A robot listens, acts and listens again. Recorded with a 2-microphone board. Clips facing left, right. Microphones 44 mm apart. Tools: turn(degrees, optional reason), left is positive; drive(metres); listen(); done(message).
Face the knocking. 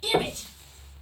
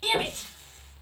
turn(degrees=45, reason="The knocking: about 45° left or 135° left.")
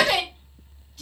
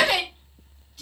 listen()
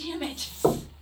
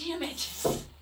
turn(degrees=95, reason="So it is at 95° left.")
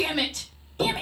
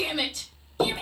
turn(degrees=-25, reason="The knocking is now 25° right.")
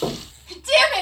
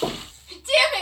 done("Facing the knocking, 1 to 2 m away.")